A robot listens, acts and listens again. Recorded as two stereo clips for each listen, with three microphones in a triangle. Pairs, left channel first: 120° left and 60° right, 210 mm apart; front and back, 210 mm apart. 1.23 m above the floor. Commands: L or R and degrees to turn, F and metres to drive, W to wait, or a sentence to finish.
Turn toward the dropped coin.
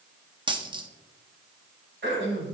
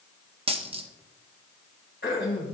R120
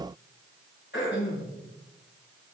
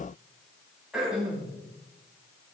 Facing where the dropped coin came from. I can't hear it now.